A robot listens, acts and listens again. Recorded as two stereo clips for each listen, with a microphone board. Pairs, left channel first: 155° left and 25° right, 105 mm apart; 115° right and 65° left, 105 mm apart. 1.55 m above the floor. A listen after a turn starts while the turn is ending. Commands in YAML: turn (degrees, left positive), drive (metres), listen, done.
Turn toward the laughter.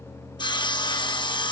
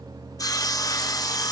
listen: true
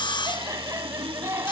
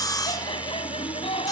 turn: -85
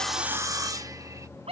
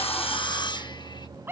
done: "Facing the laughter."